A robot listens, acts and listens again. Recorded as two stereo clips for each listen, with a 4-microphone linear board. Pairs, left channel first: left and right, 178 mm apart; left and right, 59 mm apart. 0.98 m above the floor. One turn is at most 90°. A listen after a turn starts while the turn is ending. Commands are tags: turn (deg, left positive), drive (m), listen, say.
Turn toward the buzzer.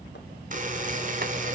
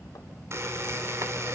<turn deg="-50"/>
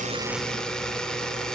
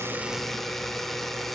<say>Found it: a buzzer, straight ahead.</say>